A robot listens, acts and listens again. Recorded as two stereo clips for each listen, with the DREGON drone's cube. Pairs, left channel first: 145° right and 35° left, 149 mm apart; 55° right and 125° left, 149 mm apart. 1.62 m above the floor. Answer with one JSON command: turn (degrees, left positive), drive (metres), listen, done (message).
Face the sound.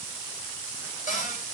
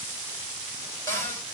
{"turn": -125}
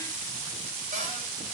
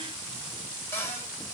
{"turn": 15}
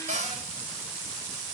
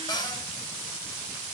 {"done": "Found it: a cupboard door, straight ahead, 2 to 4 m away."}